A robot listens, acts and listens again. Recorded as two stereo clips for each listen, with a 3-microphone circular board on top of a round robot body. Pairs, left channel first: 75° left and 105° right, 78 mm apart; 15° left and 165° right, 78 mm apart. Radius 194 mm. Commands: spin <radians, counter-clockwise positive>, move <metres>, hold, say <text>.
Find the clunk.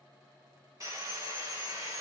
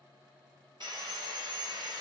hold
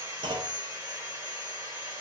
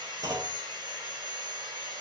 spin -2.09
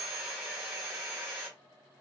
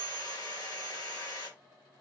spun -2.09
say I heard a clunk from this way, but can't make it out now.